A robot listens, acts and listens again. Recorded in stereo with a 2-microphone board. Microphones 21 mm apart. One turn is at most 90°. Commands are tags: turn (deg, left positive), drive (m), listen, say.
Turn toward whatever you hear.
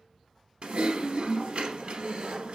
<turn deg="-65"/>
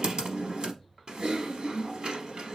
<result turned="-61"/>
<turn deg="-50"/>
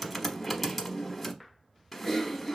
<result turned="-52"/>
<say>Facing the typing on a keyboard.</say>